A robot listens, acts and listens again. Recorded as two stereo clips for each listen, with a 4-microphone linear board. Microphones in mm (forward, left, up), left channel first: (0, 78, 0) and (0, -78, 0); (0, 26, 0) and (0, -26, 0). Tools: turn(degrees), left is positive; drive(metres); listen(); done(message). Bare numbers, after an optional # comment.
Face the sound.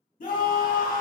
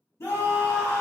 # The scream: about 60° left or 120° left.
turn(60)
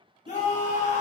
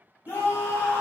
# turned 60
# So it is at 55° left.
turn(55)
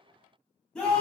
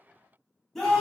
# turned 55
done("Found it: a scream, straight ahead.")